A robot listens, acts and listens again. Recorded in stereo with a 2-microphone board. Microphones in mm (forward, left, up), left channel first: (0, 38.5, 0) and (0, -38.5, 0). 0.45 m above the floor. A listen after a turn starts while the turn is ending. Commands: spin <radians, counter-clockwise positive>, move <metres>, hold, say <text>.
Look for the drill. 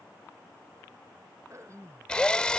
spin 0.52
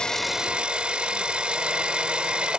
spin -0.26
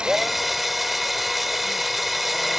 say Facing the drill.